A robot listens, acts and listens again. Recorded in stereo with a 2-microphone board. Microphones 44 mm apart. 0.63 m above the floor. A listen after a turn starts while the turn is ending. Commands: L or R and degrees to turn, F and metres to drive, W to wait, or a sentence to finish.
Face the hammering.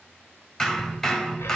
L30
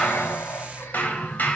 L135
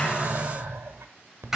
R10
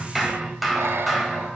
Found it: hammering, straight ahead.